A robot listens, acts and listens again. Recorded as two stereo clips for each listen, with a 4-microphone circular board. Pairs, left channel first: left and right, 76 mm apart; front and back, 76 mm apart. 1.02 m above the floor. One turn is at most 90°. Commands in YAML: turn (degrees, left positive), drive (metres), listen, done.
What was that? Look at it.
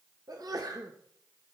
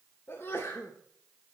turn: -55
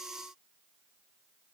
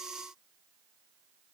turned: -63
done: "Facing where the sneeze came from. I can't hear it now."